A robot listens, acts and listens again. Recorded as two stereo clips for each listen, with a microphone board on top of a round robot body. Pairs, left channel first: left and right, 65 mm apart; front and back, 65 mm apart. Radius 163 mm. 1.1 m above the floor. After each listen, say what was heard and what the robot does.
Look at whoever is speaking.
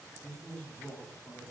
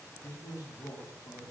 The man speaking: 30° left. Turn 30° left.
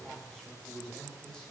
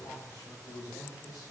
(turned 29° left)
The man speaking is now 10° left. Turn 10° left.
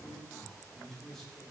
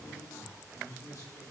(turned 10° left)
Facing the man speaking.